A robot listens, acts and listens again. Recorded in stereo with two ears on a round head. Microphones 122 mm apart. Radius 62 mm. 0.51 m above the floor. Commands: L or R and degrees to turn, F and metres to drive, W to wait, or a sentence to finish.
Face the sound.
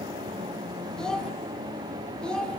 L30
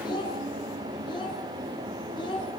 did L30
L145
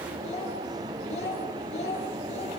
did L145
L50
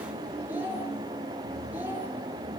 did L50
R15
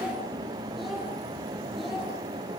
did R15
W
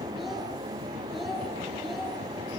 Found it: a child speaking, straight ahead.